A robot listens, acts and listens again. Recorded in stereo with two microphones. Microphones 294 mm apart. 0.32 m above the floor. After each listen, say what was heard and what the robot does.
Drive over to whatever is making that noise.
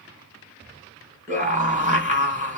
The scream: about 25° right or 155° right. Turn 25° right.
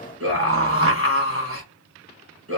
So it is at 130° right. Turn 130° right.
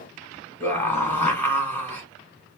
The scream is now 10° left. Turn 10° left.
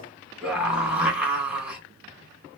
Drive 1.0 m forward.
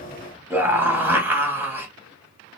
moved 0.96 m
The scream is now 10° right. Turn 10° right.
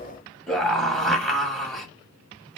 Drive 1.0 m forward.
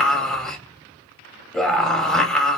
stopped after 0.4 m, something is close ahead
Arrived at the scream, straight ahead.